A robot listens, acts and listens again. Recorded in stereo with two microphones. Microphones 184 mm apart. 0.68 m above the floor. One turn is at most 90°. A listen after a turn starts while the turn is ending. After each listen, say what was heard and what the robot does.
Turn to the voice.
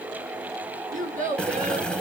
The child speaking: about 45° right or 135° right. Turn 45° right.
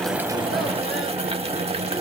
Keep listening.
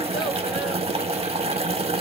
Keep listening.
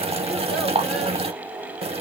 I heard a child speaking, but can't make it out now. It was about straight ahead or 90° right.